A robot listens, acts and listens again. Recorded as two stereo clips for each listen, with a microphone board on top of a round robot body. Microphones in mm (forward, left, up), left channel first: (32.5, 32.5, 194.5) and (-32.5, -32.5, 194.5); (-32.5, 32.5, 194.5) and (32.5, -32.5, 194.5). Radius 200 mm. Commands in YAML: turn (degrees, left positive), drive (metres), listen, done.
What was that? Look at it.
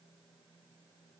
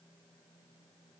listen: true
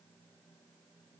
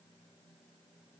listen: true
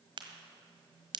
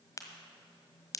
turn: -170
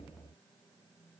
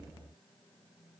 done: "Facing where the crack came from. I can't hear it now."